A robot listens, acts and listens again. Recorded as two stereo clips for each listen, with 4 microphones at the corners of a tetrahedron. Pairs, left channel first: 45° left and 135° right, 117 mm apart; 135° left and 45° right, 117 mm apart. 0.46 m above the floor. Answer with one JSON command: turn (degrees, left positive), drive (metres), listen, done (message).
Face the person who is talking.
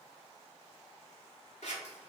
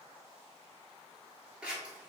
{"listen": true}
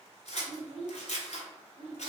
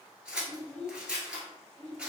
{"turn": -135}
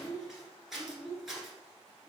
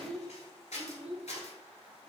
{"turn": -35}
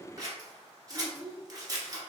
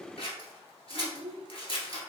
{"done": "Found it: a child speaking, straight ahead, 1 to 2 m away."}